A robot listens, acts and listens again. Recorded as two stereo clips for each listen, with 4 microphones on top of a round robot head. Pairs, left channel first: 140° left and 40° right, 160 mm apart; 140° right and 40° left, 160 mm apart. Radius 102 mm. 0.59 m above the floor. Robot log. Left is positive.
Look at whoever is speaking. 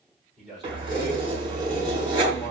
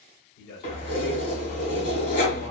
note: The man speaking: 130° right.
cmd yaw -130
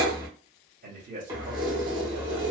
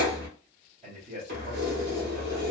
end: Found it: a man speaking, straight ahead, 1 to 2 m away.